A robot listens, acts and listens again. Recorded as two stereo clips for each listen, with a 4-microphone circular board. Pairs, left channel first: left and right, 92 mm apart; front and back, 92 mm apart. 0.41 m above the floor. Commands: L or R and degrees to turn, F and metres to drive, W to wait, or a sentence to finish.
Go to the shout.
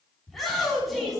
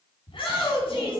F1.0
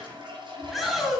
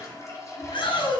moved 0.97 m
F1.0
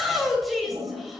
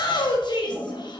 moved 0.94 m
F1.0
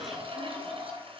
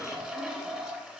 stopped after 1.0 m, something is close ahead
W
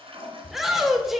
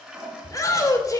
Arrived at the shout, straight ahead.